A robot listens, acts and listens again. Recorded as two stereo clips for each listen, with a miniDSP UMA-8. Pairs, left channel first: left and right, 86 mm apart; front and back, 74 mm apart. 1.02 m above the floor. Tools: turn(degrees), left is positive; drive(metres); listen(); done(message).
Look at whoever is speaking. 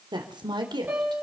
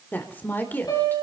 turn(degrees=-65)
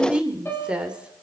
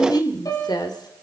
turn(degrees=-10)
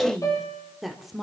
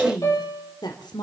done("Facing the woman speaking, 2 to 4 m away.")